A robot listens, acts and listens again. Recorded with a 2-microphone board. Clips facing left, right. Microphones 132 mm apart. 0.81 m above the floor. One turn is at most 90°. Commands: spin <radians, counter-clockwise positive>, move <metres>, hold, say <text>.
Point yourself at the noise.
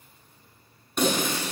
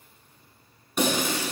spin -0.52
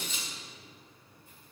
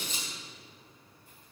spin -1.57
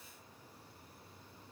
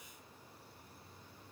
spin -0.87
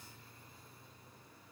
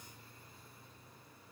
say I heard breaking glass from this way, but can't make it out now.